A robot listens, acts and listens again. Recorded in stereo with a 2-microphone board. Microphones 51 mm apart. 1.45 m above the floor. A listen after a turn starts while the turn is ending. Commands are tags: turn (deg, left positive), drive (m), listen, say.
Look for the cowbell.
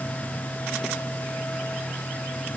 <listen/>
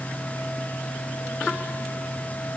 <listen/>
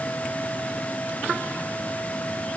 <say>I can't make out a cowbell.</say>